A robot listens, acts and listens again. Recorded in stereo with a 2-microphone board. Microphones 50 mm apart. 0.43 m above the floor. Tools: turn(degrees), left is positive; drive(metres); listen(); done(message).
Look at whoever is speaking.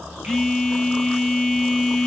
listen()
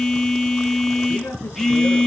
turn(degrees=70)
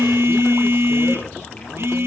listen()
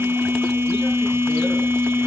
listen()
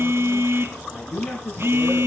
turn(degrees=40)
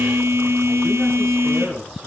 done("Found it: a man speaking, straight ahead, over 4 m away.")